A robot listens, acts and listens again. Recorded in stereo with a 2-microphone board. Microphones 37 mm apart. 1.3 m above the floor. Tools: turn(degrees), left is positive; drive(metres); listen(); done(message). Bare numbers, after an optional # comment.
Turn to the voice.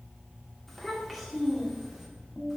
turn(-30)
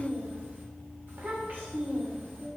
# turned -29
# So it is at 120° right.
turn(-120)
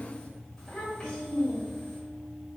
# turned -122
# The child speaking is now 15° left.
turn(15)
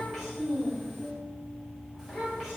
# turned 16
done("Facing the child speaking.")